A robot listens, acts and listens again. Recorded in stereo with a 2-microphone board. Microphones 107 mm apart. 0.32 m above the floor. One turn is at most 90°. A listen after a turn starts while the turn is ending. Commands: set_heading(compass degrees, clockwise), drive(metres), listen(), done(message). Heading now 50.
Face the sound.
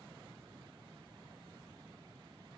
listen()
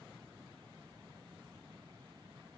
listen()
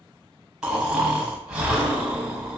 set_heading(80)
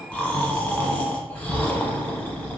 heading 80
set_heading(60)
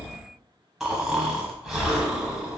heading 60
done("Facing the snoring.")